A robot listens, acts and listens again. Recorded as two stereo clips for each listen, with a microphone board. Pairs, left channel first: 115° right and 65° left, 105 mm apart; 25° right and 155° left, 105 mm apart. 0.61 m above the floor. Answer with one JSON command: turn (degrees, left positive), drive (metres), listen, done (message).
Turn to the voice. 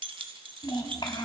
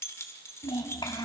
{"turn": -70}
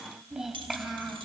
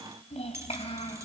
{"turn": -20}
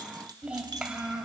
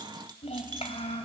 {"turn": -15}
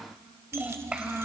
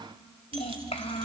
{"turn": -15}
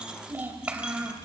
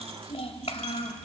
{"turn": -10}
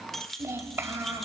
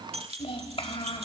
{"done": "Found it: a child speaking, straight ahead."}